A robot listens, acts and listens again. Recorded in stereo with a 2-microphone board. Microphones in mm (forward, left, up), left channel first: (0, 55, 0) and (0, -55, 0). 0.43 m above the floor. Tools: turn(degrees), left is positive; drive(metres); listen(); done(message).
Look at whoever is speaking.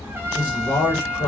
turn(degrees=45)
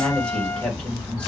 turn(degrees=15)
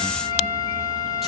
listen()
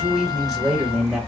done("Facing the man speaking, 1 to 2 m away.")